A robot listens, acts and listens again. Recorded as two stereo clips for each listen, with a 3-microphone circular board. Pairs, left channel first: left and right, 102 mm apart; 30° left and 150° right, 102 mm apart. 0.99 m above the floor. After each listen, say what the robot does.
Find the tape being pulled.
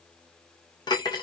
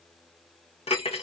Keep listening.
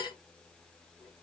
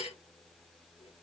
Keep listening.
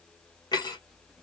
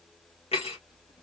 I can't make out tape being pulled to turn to.